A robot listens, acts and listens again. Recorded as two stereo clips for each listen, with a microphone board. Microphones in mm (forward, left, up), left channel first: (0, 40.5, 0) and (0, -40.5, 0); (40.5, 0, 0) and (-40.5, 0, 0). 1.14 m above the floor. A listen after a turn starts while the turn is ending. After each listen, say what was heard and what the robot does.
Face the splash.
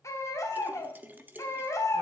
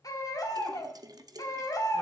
The splash: 155° right. Turn 155° right.
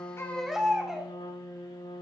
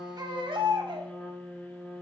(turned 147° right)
Facing where the splash came from. I can't hear it now.